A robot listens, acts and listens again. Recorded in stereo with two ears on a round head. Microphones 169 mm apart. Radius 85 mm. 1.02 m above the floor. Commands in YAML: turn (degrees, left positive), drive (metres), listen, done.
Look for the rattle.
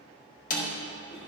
listen: true
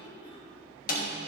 listen: true
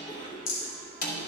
turn: 75
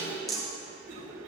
done: "Facing the rattle, 2 to 4 m away."